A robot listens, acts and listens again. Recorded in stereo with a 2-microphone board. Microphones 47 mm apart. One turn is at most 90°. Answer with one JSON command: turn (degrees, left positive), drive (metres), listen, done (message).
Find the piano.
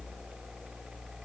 {"listen": true}
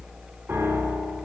{"turn": -70}
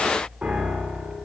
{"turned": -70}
{"turn": -30}
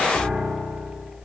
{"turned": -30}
{"done": "Facing the piano, 1 to 2 m away."}